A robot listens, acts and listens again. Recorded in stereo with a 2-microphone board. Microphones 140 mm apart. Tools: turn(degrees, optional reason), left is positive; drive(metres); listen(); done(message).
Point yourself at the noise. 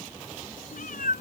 turn(degrees=70, reason="The cat meowing: about 70° left or 110° left.")
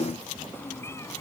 turn(degrees=20, reason="So it is at 20° left.")
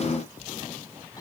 listen()
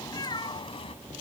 turn(degrees=35, reason="The cat meowing is now 35° left.")
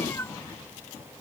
turn(degrees=20, reason="The cat meowing is now 20° left.")
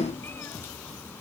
listen()
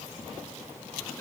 listen()
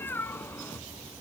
turn(degrees=15, reason="The cat meowing is now 15° left.")
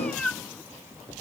done("Found it: a cat meowing, straight ahead.")